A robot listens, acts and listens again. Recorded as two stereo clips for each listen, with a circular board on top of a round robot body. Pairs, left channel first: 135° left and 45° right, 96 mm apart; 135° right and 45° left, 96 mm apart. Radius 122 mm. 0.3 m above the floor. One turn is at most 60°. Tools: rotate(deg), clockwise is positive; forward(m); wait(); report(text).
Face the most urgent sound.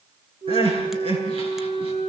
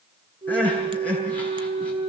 rotate(60)
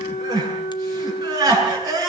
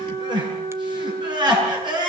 report("Found it: crying, straight ahead, over 4 m away.")